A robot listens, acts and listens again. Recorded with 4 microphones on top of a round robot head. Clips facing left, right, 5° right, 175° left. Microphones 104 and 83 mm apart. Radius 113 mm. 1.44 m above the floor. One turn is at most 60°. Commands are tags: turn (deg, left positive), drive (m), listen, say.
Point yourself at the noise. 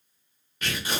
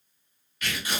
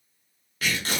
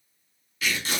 <turn deg="30"/>
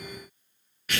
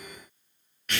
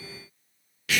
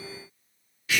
<say>Found it: tearing paper, straight ahead.</say>